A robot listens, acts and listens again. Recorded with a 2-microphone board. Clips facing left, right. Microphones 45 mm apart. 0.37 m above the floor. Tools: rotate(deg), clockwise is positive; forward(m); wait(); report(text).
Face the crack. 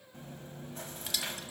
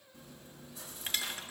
wait()
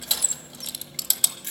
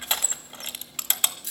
wait()
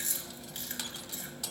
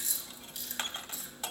report("I can't make out a crack, only crushing and chewing.")